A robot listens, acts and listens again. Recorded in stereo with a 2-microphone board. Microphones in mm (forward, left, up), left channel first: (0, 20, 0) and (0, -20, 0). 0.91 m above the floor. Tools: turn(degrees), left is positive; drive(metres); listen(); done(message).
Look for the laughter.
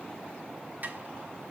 listen()
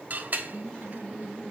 turn(degrees=30)
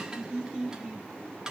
turn(degrees=-15)
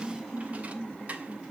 done("Found it: laughter, straight ahead.")